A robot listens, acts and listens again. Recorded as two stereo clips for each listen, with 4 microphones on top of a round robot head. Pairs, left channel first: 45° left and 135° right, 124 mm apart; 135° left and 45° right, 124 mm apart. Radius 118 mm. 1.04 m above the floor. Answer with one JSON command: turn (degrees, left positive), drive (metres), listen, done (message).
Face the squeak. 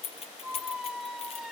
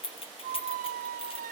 {"turn": -45}
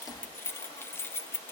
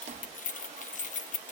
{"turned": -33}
{"turn": -15}
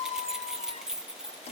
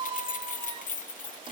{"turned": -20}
{"done": "Found it: a squeak, straight ahead, under 1 m away."}